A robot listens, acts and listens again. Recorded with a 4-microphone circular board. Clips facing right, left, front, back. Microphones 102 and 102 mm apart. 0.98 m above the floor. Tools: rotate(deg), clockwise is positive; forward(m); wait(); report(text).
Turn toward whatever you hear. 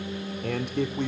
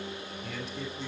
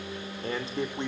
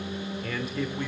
rotate(65)
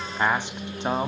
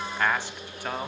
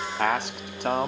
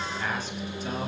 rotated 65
rotate(25)
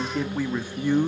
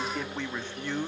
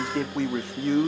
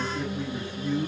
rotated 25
rotate(15)
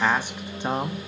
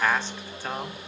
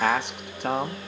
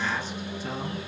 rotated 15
rotate(25)
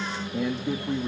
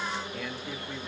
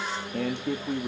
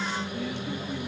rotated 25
rotate(30)
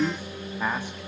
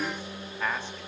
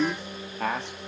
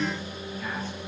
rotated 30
rotate(15)
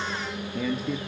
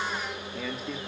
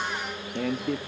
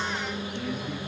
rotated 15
report("Facing the man speaking.")